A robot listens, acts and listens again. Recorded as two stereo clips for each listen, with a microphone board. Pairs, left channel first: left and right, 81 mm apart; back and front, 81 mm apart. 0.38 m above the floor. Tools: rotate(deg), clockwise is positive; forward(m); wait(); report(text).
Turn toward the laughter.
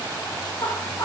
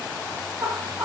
rotate(-45)
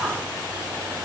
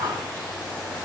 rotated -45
report("Facing the laughter.")